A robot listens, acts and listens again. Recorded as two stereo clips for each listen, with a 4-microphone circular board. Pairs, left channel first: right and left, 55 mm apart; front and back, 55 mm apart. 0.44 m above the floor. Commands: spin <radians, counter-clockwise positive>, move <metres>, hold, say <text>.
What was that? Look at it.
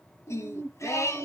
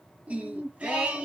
spin -1.92
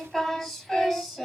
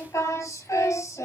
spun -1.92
say Found it: singing, straight ahead.